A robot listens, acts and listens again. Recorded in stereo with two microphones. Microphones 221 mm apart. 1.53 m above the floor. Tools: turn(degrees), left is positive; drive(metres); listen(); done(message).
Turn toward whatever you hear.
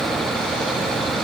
listen()
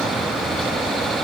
listen()
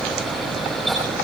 done("I can't make out anything.")